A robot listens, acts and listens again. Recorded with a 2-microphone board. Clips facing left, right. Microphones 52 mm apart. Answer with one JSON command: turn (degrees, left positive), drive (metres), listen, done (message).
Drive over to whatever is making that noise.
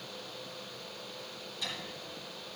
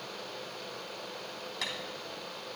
{"turn": -90}
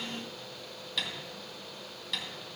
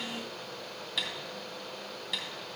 {"drive": 1.0}
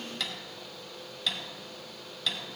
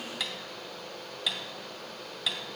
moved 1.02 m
{"drive": 1.0}
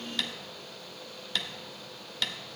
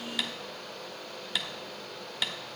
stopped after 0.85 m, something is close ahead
{"turn": -10}
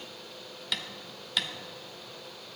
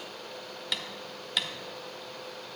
{"done": "Arrived at the tapping, straight ahead."}